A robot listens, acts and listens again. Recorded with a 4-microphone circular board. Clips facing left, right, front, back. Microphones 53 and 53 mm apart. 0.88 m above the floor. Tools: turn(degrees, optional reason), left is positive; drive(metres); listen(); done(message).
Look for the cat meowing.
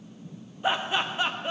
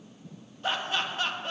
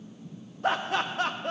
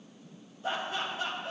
listen()
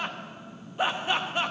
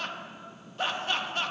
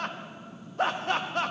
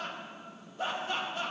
listen()
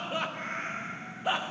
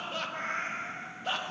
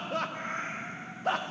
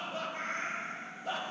turn(degrees=-65, reason="The cat meowing: 65° right.")
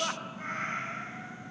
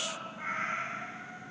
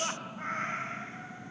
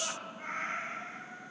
done("Facing the cat meowing.")